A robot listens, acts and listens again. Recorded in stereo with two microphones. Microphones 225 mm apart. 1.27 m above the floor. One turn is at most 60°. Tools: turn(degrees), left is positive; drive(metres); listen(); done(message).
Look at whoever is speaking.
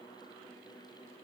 listen()
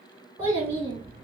turn(degrees=-25)
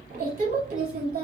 turn(degrees=-60)
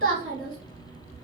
turn(degrees=-60)
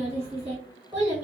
turn(degrees=-10)
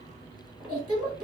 done("Found it: a child speaking, straight ahead.")